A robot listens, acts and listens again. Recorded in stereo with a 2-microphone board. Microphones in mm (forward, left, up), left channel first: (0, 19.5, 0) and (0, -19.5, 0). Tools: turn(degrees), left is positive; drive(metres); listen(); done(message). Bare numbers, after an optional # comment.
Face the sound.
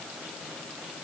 listen()
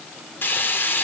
# The frying: about 65° left or 115° left.
turn(65)
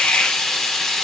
# So it is at 10° left.
turn(10)
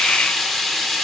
done("Facing the frying.")